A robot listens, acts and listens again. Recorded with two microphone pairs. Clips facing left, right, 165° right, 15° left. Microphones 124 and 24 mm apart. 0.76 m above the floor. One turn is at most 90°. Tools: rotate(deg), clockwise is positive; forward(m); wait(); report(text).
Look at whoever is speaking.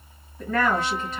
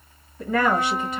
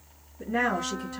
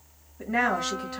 rotate(15)
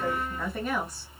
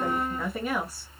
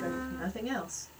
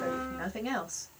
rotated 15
report("Found it: a woman speaking, straight ahead, 1 to 2 m away.")